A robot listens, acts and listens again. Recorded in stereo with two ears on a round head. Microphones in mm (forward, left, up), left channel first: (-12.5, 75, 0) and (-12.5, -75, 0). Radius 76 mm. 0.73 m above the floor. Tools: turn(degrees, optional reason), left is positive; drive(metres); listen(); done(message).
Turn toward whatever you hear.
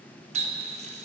turn(degrees=-40, reason="The running tap: about 40° right or 140° right.")
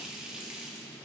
done("Found it: a running tap, straight ahead, under 1 m away.")